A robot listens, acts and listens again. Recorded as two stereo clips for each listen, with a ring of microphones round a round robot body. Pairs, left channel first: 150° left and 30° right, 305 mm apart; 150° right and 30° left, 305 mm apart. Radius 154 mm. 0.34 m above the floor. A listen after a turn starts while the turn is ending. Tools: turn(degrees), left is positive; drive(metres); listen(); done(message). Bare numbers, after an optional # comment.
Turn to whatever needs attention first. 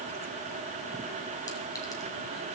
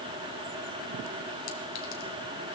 listen()
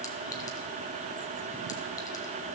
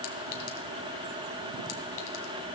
listen()
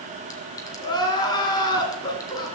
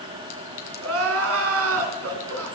# The crying: 75° left.
turn(75)
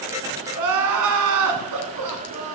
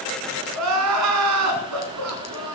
done("Facing the crying.")